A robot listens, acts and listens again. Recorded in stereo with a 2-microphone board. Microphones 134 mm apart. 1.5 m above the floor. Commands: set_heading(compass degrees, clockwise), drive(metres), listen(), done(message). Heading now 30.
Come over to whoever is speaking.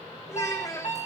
set_heading(5)
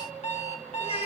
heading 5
set_heading(235)
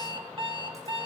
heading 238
listen()
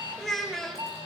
drive(1.0)
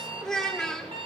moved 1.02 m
drive(1.0)
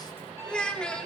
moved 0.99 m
set_heading(228)
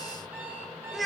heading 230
drive(1.0)
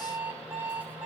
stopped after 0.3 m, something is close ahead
listen()
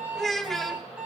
done("I am next to the child speaking.")